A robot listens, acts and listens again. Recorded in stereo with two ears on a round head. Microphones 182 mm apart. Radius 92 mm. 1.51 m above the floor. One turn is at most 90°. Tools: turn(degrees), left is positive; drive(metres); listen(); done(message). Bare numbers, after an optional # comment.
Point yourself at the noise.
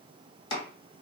# The chopping: about 25° left or 155° left.
turn(25)
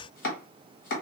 # So it is at 125° left.
turn(90)
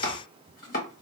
# The chopping is now 50° left.
turn(50)
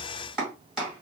done("Found it: chopping, straight ahead, 1 to 2 m away.")